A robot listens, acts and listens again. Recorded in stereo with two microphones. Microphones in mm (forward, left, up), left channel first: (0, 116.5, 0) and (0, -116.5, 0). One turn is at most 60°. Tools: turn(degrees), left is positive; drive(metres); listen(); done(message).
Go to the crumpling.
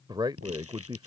turn(degrees=-60)
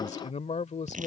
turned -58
turn(degrees=-35)
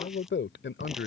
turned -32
listen()
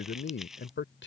drive(metres=1.0)
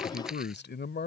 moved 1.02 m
listen()
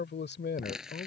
drive(metres=1.0)
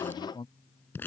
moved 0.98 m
turn(degrees=10)
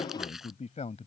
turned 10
listen()
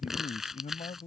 drive(metres=1.0)
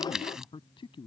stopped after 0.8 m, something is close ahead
done("I am next to the crumpling.")